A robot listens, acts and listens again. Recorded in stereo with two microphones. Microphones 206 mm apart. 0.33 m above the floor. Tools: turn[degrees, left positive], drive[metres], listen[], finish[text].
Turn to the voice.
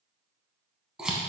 Action: listen[]
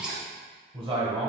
Thought: The man speaking: about 25° right or 155° right.
Action: turn[-25]
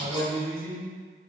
Thought: So it is at 125° right.
Action: turn[-125]
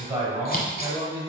Thought: The man speaking is now 15° right.
Action: turn[-15]
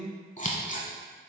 Action: finish[Facing the man speaking.]